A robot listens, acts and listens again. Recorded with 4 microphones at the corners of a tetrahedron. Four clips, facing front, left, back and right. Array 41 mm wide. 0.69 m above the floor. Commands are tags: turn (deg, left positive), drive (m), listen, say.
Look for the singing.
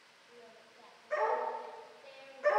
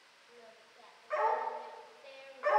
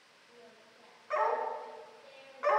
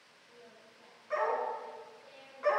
<turn deg="105"/>
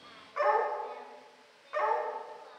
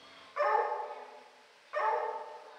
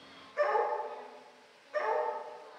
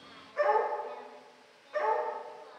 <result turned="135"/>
<turn deg="-30"/>
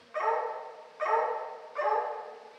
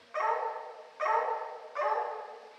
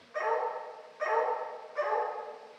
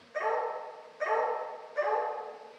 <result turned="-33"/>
<listen/>
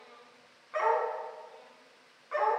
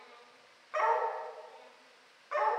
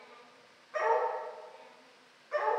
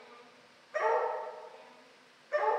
<turn deg="55"/>
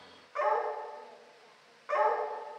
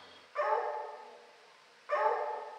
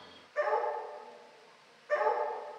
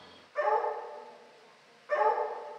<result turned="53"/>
<listen/>
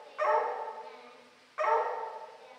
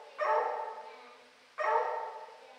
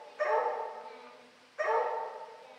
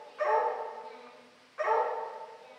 <listen/>
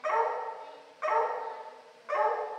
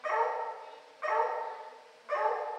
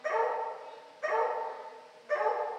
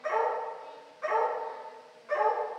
<say>I heard singing from this way, but can't make it out now.</say>